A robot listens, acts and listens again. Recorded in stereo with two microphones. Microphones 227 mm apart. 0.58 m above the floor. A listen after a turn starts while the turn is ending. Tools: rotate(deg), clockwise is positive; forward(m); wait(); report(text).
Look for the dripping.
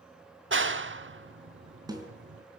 wait()
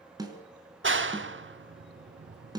wait()
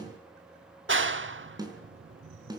report("I can't make out dripping to turn to.")